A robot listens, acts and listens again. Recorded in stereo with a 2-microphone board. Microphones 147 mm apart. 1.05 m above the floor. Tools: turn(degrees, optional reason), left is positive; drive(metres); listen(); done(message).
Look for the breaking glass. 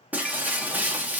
turn(degrees=-30)
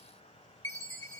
listen()
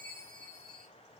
done("I heard breaking glass, but can't make it out now. It was about 20° left or 140° right.")